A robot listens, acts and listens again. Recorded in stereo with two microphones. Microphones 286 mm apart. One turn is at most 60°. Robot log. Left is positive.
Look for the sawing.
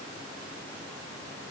cmd idle
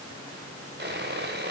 note: The sawing: about 35° right or 145° right.
cmd yaw -35
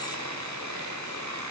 note: So it is at 105° right.
cmd yaw -60
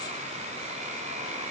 note: The sawing is now 25° right.
cmd yaw -25
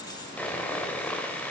end: Found it: sawing, straight ahead, 1 to 2 m away.